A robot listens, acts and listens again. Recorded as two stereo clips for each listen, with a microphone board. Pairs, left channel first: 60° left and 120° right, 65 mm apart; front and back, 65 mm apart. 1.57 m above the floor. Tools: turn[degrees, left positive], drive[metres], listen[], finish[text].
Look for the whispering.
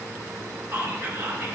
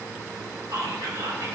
Thought: The whispering: 165° right.
Action: turn[-165]
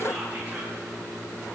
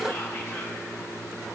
Action: listen[]
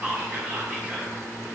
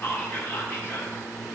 Thought: The whispering is now 55° right.
Action: turn[-55]
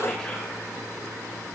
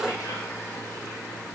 Action: listen[]
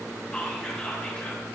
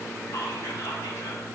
Thought: The whispering is now 15° right.
Action: turn[-15]
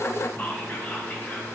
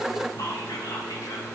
Action: finish[Facing the whispering, 2 to 4 m away.]